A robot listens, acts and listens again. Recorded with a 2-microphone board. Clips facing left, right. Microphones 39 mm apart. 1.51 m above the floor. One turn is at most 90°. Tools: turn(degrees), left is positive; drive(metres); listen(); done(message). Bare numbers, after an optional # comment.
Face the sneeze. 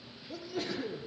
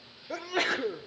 # The sneeze: about 65° right or 115° right.
turn(-65)
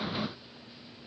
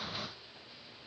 listen()
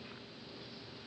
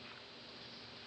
done("I heard a sneeze, but can't make it out now. It was about straight ahead or 50° right.")